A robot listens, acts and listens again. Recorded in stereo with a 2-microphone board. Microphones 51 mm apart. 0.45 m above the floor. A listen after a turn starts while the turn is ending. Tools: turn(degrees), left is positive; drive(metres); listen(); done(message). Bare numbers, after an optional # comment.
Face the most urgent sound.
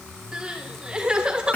# The crying: about 15° right or 165° right.
turn(-15)
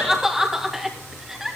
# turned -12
done("Found it: crying, straight ahead, 2 to 4 m away.")